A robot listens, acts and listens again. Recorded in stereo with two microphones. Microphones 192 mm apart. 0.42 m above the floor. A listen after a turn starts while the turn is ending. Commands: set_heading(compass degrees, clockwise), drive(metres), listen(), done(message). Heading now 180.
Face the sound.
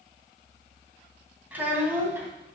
set_heading(210)
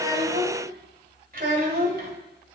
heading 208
set_heading(333)
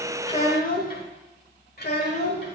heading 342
set_heading(287)
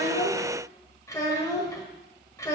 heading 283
set_heading(268)
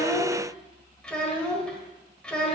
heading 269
done("Found it: a child speaking, straight ahead.")